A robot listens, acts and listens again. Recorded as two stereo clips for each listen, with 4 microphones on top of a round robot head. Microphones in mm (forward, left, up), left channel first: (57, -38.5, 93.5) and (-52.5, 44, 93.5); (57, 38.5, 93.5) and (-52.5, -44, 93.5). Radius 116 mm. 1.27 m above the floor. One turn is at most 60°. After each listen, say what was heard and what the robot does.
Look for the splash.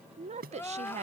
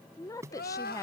The splash: 145° left. Turn 60° left.
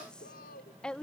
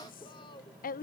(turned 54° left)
Nothing new. It was at 95° left. Turn 60° left.
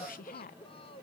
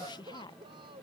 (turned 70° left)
Nothing new. It was at 25° left. Turn 25° left.
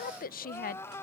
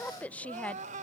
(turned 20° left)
Facing where the splash came from. I can't hear it now.